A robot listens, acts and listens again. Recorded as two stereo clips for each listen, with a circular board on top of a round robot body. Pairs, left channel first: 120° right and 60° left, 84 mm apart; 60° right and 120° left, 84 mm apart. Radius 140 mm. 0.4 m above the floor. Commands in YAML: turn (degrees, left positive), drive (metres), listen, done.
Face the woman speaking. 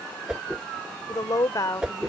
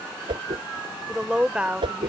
turn: -165
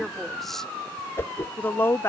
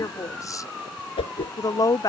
turn: -75
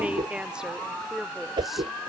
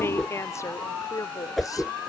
turn: -25
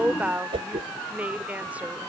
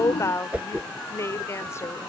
turn: -10
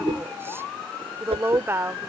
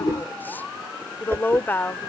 done: "Found it: a woman speaking, straight ahead."